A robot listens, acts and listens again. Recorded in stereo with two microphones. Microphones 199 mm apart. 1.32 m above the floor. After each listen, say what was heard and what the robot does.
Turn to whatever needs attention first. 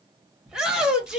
Turn 30° right.
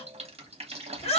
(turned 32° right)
So it is at 30° left. Turn 30° left.
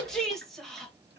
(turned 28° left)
Facing the shout, 1 to 2 m away.